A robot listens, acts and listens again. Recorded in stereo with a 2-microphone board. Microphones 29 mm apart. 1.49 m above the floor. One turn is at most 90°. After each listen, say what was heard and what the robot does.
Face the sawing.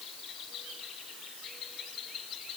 Keep listening.
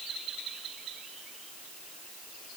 Keep listening.
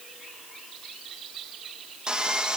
The sawing: about 25° right or 155° right. Turn 25° right.
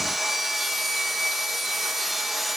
Found it: sawing, straight ahead.